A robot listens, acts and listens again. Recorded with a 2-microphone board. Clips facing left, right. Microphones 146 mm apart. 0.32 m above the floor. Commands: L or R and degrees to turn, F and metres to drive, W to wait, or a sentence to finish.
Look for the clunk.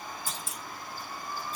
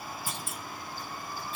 R65
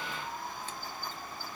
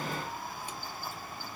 W
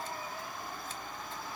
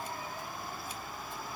I heard a clunk, but can't make it out now. It was about straight ahead or 50° right.